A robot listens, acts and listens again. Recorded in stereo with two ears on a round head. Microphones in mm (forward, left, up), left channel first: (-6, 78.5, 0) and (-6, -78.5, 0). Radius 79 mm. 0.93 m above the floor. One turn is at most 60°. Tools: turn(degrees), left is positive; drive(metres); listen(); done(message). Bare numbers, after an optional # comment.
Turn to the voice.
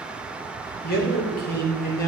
# The man speaking: about 60° left or 120° left.
turn(60)
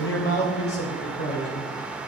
# So it is at 65° left.
turn(60)
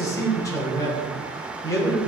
# The man speaking is now 20° left.
turn(20)
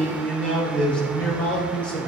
done("Facing the man speaking, 2 to 4 m away.")